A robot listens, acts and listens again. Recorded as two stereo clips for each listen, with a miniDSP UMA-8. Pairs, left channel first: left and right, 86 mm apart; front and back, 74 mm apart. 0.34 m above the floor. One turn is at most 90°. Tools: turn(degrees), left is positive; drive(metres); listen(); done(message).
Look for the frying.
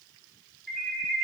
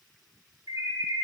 listen()
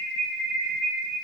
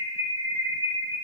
listen()
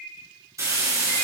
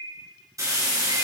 turn(degrees=-90)
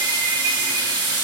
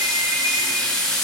turn(degrees=-80)
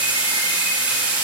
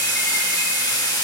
turn(degrees=-15)
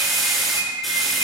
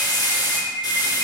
done("Facing the frying.")